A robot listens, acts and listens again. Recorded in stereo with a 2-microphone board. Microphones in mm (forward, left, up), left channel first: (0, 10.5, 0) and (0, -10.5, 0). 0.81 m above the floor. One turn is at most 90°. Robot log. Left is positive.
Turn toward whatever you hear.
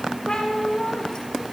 note: The cat meowing: about 45° left or 135° left.
cmd yaw +45
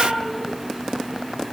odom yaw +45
end: Facing the cat meowing.